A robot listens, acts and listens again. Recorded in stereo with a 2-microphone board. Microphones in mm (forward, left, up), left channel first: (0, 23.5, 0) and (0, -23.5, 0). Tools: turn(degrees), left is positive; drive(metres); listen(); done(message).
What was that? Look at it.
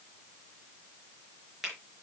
turn(degrees=-30)
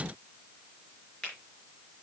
turn(degrees=25)
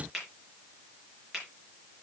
done("Found it: a finger snap, straight ahead, over 4 m away.")